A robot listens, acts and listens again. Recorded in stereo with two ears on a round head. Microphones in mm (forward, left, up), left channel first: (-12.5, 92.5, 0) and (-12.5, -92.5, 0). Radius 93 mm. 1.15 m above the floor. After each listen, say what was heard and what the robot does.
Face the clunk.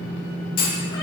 The clunk: about 40° left or 140° left. Turn 40° left.
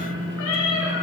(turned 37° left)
Keep listening.
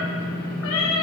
I heard a clunk, but can't make it out now. It was about 5° left or 100° left.